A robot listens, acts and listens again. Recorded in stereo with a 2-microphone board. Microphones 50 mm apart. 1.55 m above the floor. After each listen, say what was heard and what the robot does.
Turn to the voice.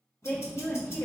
The woman speaking: about 70° left or 110° left. Turn 70° left.
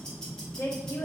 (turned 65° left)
Keep listening.
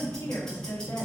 Keep listening.
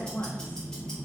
I heard a woman speaking, but can't make it out now. It was about 5° left or 45° left.